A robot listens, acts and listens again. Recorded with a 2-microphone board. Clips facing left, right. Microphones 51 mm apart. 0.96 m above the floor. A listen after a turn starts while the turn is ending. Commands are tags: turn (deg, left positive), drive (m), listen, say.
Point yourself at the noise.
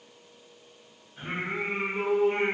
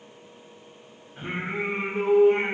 <turn deg="-35"/>
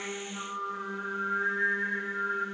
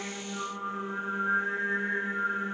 <turn deg="-35"/>
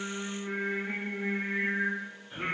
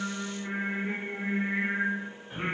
<turn deg="-45"/>
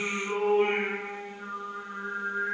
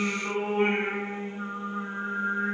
<turn deg="-60"/>
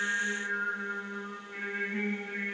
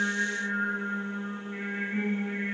<turn deg="-10"/>
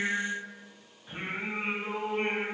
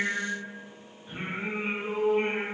<say>Found it: singing, straight ahead, 1 to 2 m away.</say>